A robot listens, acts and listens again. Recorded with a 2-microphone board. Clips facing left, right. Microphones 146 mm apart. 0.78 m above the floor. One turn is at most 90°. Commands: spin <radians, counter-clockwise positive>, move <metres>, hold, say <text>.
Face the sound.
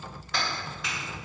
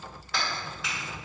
spin -0.52
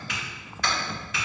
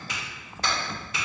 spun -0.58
spin -1.57
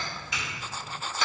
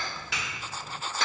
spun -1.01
spin -1.40
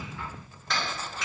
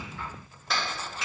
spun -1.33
say Facing the clap, 2 to 4 m away.